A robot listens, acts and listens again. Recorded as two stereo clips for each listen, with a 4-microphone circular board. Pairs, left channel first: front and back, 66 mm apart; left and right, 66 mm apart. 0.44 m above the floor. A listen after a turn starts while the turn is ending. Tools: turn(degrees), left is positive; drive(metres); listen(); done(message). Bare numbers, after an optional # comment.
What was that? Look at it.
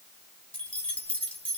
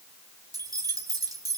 # The keys jangling: 70° right.
turn(-70)
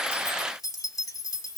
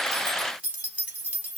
# The keys jangling is now 25° right.
turn(-25)
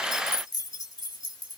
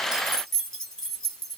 done("Found it: keys jangling, straight ahead, 2 to 4 m away.")